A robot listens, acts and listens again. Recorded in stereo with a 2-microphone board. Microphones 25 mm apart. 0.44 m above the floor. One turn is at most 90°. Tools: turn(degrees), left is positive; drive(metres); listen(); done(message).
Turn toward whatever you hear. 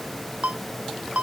turn(degrees=-70)
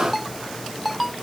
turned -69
done("Facing the ringtone.")